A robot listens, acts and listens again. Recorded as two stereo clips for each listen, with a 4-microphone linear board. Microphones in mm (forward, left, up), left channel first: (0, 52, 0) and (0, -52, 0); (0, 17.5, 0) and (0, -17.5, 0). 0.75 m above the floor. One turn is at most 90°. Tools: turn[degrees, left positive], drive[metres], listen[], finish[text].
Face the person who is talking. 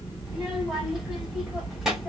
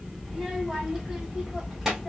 Action: turn[-30]
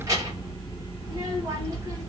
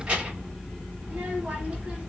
Thought: So it is at 145° right.
Action: turn[-90]
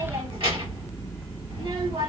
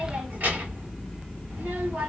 Thought: The child speaking is now 60° right.
Action: turn[-60]
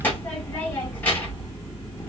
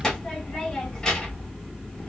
Thought: The child speaking is now 15° left.
Action: turn[15]
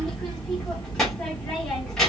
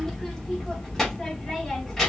Action: finish[Found it: a child speaking, straight ahead.]